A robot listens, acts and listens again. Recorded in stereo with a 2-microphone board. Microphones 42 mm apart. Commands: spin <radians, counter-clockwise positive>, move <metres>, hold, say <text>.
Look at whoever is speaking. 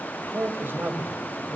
spin -0.96
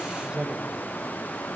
spin -0.44
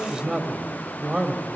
spin -0.26
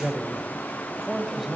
say Facing the man speaking, 2 to 4 m away.